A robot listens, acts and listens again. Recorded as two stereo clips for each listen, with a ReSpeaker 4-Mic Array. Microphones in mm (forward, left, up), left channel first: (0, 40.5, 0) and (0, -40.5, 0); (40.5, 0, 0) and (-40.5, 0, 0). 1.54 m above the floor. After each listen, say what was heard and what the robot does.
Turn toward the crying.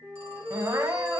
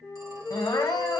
The crying: 45° right. Turn 45° right.
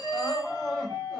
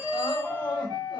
Found it: crying, straight ahead, under 1 m away.